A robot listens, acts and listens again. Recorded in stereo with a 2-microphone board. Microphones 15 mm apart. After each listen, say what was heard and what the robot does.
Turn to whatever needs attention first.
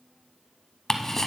Keep listening.
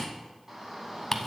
The shout: about 35° right or 145° right. Turn 35° right.
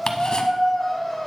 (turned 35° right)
Facing the shout, 2 to 4 m away.